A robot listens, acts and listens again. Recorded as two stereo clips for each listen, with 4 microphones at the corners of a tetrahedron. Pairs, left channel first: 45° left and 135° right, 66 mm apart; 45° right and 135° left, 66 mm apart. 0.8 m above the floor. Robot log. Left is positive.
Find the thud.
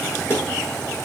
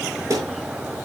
note: The thud: 105° left.
cmd yaw +105
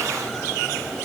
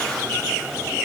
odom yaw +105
end: Facing where the thud came from. I can't hear it now.